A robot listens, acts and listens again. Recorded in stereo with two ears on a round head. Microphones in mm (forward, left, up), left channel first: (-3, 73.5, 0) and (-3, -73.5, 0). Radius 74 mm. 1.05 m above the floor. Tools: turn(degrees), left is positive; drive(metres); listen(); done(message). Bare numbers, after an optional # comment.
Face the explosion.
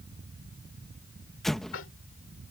turn(30)
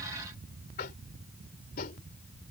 listen()
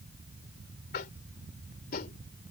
done("I heard an explosion, but can't make it out now. It was about 30° right or 150° left.")